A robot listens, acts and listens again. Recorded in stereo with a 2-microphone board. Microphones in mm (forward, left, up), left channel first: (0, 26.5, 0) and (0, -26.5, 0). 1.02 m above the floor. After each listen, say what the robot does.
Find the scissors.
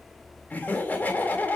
Keep listening.
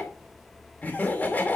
Keep listening.
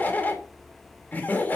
I can't make out scissors to turn to.